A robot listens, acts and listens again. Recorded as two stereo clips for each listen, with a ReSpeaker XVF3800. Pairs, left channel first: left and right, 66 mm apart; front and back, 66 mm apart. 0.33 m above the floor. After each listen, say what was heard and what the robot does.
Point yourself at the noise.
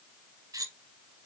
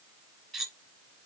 The cutlery clinking: 85° right. Turn 85° right.
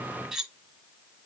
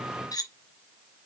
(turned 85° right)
Facing the cutlery clinking.